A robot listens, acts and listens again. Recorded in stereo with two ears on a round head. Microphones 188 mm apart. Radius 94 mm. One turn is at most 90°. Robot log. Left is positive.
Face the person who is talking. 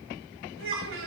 note: The child speaking: about 70° right or 110° right.
cmd yaw -70
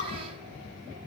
cmd idle
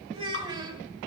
note: So it is at 20° right.
cmd yaw -20
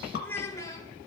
note: The child speaking is now 20° left.
cmd yaw +20
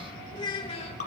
note: The child speaking is now 30° left.
cmd yaw +30
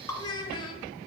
note: The child speaking is now 25° left.
cmd yaw +25
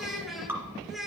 end: Facing the child speaking.